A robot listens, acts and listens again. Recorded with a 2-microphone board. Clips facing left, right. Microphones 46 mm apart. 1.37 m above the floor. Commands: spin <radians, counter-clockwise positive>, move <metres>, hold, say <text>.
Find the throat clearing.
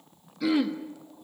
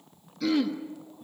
spin 0.52
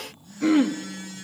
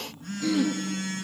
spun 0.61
spin 2.36
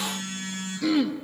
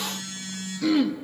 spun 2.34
say Facing the throat clearing, 1 to 2 m away.